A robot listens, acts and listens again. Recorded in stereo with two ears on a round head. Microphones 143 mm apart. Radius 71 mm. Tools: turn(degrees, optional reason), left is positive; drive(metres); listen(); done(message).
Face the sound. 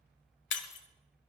turn(degrees=90)
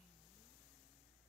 done("Facing where the breaking glass came from. I can't hear it now.")